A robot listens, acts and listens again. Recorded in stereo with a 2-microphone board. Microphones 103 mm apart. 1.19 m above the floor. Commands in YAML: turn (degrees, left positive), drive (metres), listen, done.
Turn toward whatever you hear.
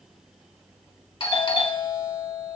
turn: 60
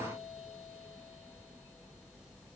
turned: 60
listen: true
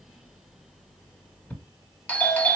turn: 15
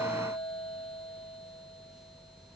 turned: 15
done: "Found it: a doorbell, straight ahead, 1 to 2 m away."